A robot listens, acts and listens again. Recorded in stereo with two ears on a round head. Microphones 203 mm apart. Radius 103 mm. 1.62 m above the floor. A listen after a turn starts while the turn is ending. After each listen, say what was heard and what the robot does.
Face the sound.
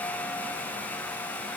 Keep listening.
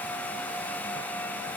Keep listening.
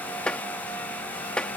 Turn 30° left.
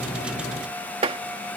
So it is at 25° right. Turn 25° right.
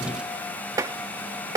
The tapping is now 15° right. Turn 15° right.
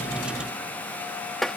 Found it: tapping, straight ahead.